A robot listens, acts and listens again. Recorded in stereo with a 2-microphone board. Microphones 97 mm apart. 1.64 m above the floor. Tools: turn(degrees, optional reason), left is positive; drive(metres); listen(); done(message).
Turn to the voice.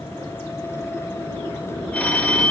listen()
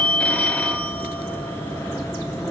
listen()
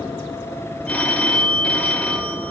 done("I can't make out anyone speaking, only a phone ringing.")